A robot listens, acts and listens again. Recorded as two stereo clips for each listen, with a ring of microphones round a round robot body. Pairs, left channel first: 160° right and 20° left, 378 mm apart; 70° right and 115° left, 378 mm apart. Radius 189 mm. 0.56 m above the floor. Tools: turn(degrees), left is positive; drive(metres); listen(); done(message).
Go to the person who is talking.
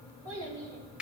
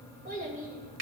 turn(degrees=45)
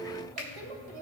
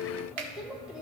turn(degrees=25)
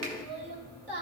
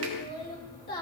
drive(metres=1.0)
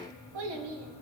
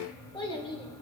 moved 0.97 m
turn(degrees=10)
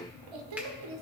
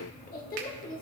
drive(metres=1.0)
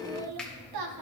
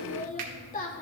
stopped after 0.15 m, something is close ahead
done("Arrived at the child speaking, straight ahead.")